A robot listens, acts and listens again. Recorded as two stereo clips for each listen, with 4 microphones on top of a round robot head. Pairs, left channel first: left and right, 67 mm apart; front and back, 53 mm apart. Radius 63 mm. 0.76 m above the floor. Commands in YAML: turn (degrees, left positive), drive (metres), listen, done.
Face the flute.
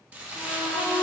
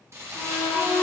turn: 20
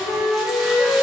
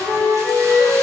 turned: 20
done: "Facing the flute."